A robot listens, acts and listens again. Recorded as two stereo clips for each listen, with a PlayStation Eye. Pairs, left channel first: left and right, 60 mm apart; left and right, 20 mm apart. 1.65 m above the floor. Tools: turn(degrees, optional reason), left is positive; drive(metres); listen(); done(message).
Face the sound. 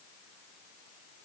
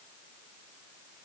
listen()
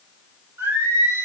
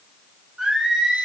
turn(degrees=-55, reason="The singing: about 55° right or 125° right.")
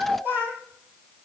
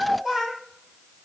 turn(degrees=-35, reason="So it is at 35° right.")
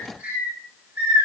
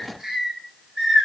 turn(degrees=-40, reason="The singing is now 40° right.")
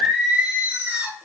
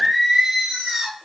turn(degrees=-25, reason="The singing is now 25° right.")
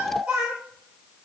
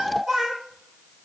turn(degrees=-20, reason="The singing is now 20° right.")
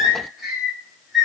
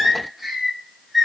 turn(degrees=-10, reason="The singing is now 10° right.")
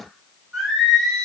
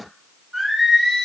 done("Facing the singing, 2 to 4 m away.")